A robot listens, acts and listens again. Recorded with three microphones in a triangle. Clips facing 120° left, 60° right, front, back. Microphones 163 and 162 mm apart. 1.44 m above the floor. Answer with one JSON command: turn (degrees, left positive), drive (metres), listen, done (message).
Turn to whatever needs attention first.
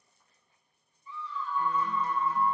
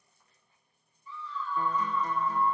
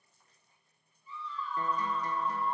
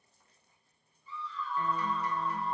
{"turn": -170}
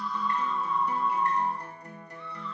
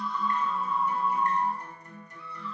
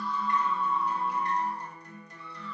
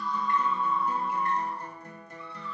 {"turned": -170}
{"turn": 25}
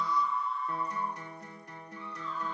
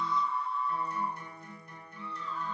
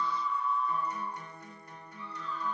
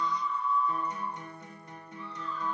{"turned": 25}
{"done": "Found it: a scream, straight ahead, 2 to 4 m away."}